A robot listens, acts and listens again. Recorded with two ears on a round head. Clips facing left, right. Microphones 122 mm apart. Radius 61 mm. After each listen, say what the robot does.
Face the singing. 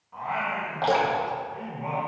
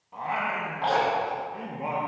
Turn 60° right.
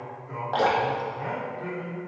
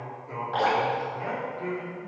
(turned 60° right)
Turn 20° right.
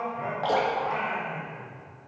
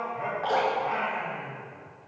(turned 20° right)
Turn 15° right.
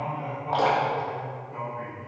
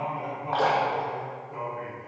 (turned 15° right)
Facing the singing.